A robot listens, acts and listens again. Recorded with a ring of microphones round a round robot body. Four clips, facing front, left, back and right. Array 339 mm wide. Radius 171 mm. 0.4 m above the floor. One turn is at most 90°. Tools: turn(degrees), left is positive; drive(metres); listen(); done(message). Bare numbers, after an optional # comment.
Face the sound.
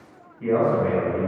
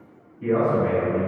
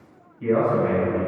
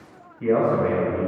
# The man speaking: 85° right.
turn(-85)
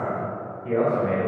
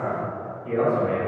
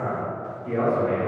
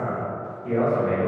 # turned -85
# The man speaking is now 20° right.
turn(-20)
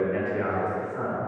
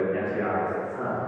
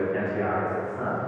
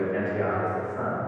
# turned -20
# The man speaking is now 30° right.
turn(-30)
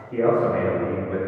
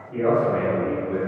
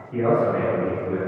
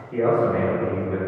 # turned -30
# The man speaking is now 40° right.
turn(-40)
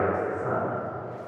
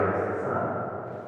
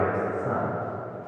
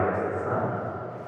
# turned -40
# The man speaking is now 30° right.
turn(-30)
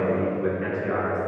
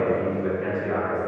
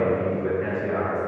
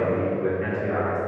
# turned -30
done("Found it: a man speaking, straight ahead, 1 to 2 m away.")